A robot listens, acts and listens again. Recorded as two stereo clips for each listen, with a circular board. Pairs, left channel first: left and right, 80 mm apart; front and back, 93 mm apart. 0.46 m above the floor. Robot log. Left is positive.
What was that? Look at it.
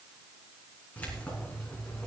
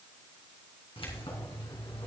note: The keys jangling: 10° left.
cmd yaw +10
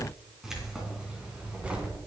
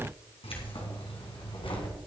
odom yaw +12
note: The keys jangling is now 20° right.
cmd yaw -20
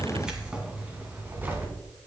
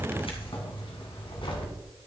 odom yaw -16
note: The keys jangling is now 25° right.
cmd yaw -25
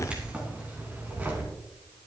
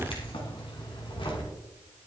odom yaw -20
note: The keys jangling is now 20° right.
cmd yaw -20
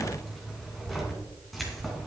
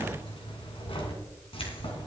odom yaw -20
end: Found it: keys jangling, straight ahead, 2 to 4 m away.